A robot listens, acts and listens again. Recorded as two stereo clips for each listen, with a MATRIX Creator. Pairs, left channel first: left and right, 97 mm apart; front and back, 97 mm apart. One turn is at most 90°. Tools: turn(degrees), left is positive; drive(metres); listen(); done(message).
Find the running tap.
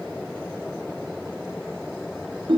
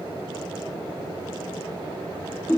listen()
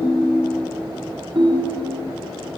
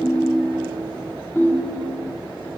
listen()
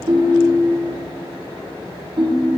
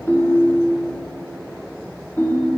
done("I can't make out a running tap to turn to.")